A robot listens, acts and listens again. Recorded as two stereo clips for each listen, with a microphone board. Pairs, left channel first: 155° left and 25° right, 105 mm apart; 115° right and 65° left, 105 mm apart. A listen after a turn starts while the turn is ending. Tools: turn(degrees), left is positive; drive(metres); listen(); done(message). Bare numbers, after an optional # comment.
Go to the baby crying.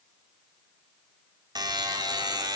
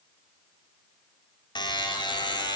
listen()
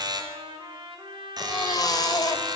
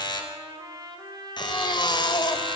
# The baby crying: 155° right.
turn(-155)
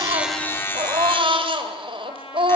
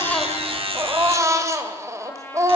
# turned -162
# The baby crying is now 10° left.
turn(10)
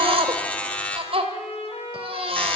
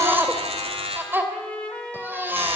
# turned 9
drive(1.0)
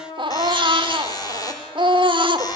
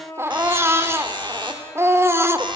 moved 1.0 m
drive(1.0)
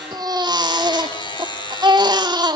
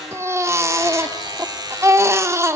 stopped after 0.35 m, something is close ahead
# The baby crying is now 10° left.
turn(10)
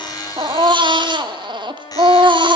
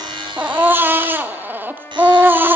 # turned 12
done("Arrived at the baby crying, straight ahead.")